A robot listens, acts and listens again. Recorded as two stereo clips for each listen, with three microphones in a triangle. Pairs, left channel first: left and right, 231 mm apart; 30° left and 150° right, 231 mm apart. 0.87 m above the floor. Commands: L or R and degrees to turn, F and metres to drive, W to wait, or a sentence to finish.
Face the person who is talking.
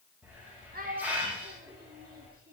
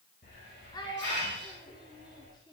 R40
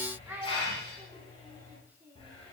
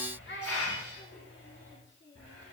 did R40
R10
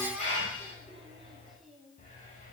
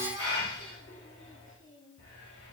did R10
W
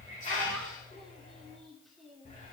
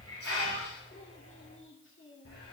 Facing the child speaking.